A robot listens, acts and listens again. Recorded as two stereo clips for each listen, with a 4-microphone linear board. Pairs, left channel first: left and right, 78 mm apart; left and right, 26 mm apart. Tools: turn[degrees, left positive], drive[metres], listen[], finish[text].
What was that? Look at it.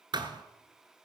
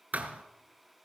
Thought: The thud: about 65° right or 115° right.
Action: turn[-65]
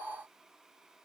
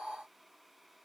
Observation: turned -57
Action: listen[]
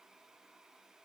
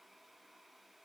Action: finish[I heard a thud, but can't make it out now. It was about 5° right or 60° right.]